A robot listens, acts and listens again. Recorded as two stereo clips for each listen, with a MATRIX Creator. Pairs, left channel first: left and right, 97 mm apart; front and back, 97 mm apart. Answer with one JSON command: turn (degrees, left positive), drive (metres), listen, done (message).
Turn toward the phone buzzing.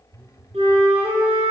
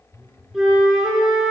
{"turn": -10}
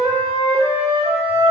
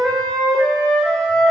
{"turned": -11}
{"listen": true}
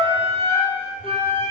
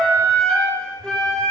{"listen": true}
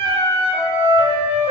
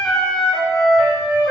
{"done": "I heard a phone buzzing from this way, but can't make it out now."}